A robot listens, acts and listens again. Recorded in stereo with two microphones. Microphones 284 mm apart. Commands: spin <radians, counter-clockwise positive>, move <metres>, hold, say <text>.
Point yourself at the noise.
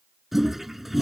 spin 0.52
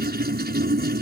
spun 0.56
spin -0.61
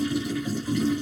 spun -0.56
say Found it: a toilet flushing, straight ahead.